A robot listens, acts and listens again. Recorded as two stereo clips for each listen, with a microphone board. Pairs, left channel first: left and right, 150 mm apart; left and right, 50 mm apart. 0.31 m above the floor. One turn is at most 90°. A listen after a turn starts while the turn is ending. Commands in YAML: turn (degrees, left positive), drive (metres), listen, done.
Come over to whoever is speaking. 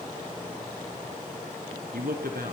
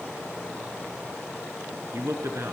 turn: -75
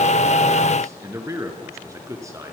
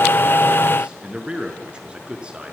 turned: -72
turn: -20
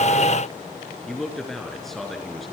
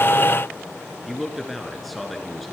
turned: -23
drive: 1.0
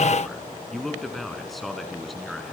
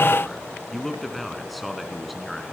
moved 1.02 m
drive: 1.0
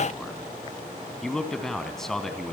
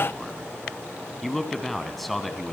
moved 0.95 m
drive: 1.0
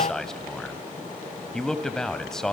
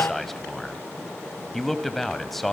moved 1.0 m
drive: 1.0
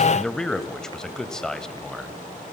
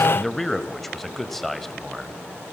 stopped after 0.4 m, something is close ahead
done: "I am next to the man speaking."